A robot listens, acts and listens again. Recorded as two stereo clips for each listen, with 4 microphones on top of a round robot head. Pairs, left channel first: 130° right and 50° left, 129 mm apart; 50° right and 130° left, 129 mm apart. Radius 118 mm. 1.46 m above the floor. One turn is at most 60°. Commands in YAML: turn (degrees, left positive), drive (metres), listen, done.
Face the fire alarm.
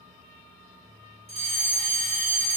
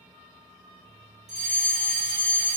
turn: 60
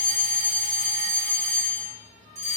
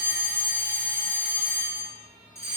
turn: 15
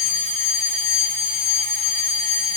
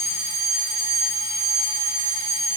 done: "Found it: a fire alarm, straight ahead, over 4 m away."